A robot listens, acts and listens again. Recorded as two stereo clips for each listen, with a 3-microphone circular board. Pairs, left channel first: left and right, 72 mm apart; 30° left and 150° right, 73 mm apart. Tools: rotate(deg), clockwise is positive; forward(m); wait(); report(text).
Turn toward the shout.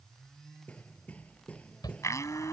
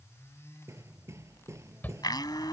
rotate(-95)
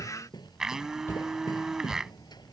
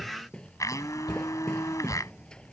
rotate(-40)
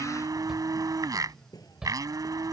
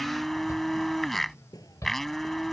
rotate(10)
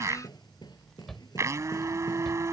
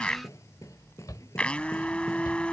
report("Facing the shout.")